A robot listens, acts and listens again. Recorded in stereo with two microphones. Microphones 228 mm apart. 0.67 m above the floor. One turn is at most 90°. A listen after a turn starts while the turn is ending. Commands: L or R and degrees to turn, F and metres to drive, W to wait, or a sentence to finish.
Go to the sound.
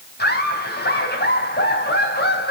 L50
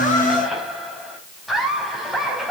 F1.0
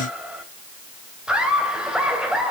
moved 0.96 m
F1.0
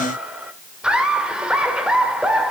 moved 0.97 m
F1.0
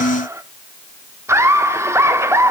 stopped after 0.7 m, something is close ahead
R15
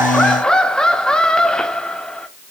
I am next to the laughter.